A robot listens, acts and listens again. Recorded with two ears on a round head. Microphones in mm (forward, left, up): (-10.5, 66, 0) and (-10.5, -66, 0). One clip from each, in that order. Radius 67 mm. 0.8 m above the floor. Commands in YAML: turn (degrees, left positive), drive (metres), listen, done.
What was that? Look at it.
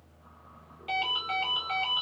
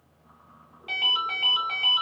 turn: 30
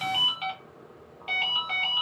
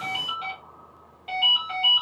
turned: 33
turn: 150
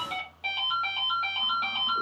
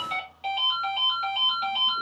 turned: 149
done: "Found it: a ringtone, straight ahead, 1 to 2 m away."